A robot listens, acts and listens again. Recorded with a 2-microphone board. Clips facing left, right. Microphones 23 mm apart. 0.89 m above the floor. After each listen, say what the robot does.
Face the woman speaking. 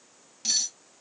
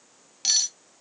Keep listening.
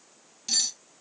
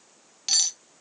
Keep listening.
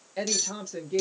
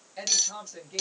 Turn 30° left.
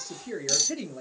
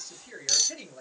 Turn 15° left.
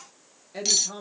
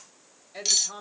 Turn 30° left.
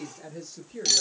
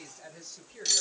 Turn 20° left.
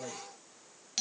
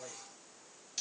Turn 150° left.
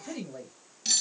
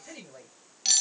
Turn 20° right.
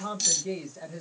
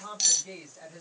Found it: a woman speaking, straight ahead.